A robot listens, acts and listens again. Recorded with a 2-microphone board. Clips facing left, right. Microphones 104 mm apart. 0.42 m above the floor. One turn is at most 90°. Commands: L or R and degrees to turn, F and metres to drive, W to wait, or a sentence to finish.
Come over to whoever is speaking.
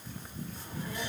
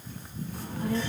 R90
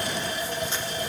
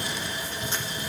F1.0
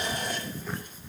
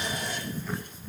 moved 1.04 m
L15
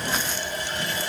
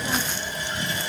F1.0
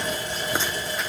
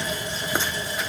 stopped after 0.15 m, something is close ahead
Arrived at the child speaking, straight ahead.